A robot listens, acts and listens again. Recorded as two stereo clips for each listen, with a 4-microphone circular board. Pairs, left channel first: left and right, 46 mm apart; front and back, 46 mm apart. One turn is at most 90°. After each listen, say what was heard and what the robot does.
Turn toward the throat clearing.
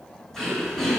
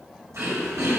The throat clearing: 170° left. Turn 90° left.
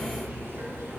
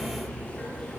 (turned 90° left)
Nothing new. It was at 80° left. Turn 80° left.
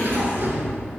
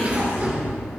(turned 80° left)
The throat clearing is now 50° left. Turn 50° left.
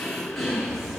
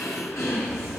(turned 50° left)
Facing the throat clearing.